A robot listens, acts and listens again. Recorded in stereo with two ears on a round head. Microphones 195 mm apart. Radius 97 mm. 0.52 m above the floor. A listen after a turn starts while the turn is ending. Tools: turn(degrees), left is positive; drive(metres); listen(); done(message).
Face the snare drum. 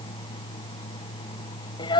listen()
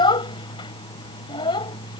listen()
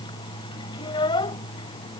done("I can't make out a snare drum, only a child speaking.")